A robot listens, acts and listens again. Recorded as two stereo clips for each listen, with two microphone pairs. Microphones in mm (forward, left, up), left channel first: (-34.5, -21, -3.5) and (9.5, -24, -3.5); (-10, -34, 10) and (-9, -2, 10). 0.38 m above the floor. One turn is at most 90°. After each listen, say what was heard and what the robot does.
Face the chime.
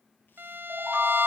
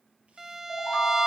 The chime: 60° right. Turn 60° right.
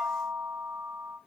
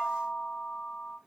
The chime is now 25° right. Turn 25° right.
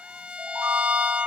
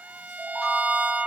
The chime is now 15° right. Turn 15° right.
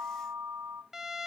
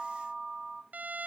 Facing the chime.